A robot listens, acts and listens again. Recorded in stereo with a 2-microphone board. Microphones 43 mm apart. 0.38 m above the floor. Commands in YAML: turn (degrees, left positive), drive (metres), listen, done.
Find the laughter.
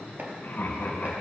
turn: 45
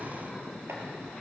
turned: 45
listen: true
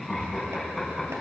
done: "Facing the laughter."